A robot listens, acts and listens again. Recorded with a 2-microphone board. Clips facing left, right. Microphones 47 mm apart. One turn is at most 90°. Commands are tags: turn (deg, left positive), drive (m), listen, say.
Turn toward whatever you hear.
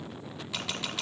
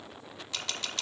<turn deg="30"/>
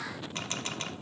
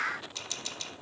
<turn deg="90"/>
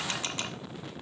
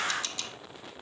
<turn deg="35"/>
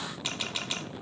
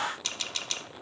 <turn deg="15"/>
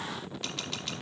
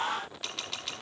<say>Found it: a camera shutter, straight ahead, 1 to 2 m away.</say>